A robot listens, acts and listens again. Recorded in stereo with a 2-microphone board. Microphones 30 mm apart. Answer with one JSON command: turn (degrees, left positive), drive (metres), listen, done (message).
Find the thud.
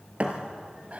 {"turn": -45}
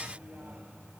{"listen": true}
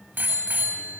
{"done": "I heard a thud, but can't make it out now. It was about straight ahead or 90° right."}